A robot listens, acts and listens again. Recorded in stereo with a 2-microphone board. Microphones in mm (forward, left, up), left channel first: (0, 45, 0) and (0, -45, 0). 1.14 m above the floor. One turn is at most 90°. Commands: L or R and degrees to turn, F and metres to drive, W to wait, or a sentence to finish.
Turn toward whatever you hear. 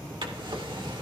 R65
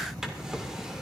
Facing the drawer, 1 to 2 m away.